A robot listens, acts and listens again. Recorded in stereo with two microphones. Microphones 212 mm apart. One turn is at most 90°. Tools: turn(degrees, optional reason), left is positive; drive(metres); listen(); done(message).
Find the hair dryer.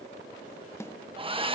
turn(degrees=-25, reason="The hair dryer: about 25° right or 155° right.")
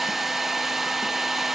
done("Facing the hair dryer, 1 to 2 m away.")